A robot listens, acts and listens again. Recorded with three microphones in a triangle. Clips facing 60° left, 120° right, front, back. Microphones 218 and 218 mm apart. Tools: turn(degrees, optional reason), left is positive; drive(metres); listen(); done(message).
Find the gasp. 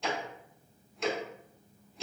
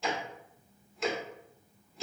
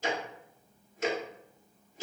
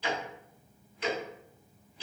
listen()
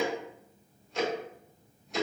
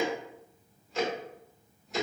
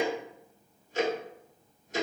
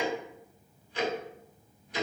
listen()
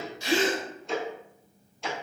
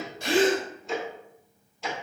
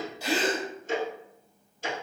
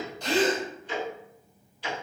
turn(degrees=-80, reason="The gasp: 80° right.")
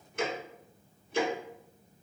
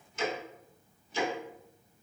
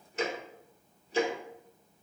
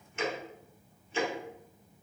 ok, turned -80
done("Facing where the gasp came from. I can't hear it now.")